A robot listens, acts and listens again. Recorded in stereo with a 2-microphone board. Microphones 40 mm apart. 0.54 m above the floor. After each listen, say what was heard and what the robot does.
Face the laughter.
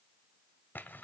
Keep listening.
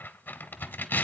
Keep listening.
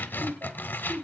The laughter: about 55° right or 125° right. Turn 55° right.
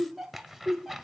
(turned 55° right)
Facing the laughter.